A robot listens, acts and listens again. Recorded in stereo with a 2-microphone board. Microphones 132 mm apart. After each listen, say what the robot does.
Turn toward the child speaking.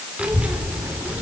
Turn 30° right.
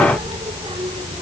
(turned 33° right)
Turn 130° right.
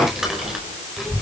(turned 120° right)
Found it: a child speaking, straight ahead.